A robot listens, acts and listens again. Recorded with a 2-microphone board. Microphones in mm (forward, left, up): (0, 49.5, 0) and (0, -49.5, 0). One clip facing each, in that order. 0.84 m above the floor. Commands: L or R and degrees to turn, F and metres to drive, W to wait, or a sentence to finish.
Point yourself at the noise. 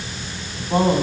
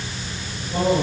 L90
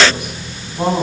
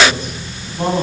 L15
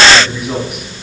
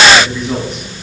L10
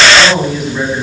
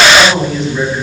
Facing the man speaking, over 4 m away.